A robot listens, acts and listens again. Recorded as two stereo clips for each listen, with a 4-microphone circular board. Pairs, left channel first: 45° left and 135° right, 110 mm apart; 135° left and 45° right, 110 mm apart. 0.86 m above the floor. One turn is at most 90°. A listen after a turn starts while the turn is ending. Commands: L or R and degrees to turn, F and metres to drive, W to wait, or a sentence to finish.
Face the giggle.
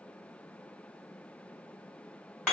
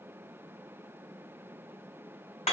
W
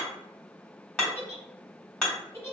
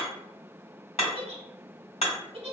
R20
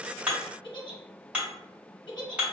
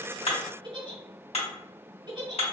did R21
Found it: a giggle, straight ahead.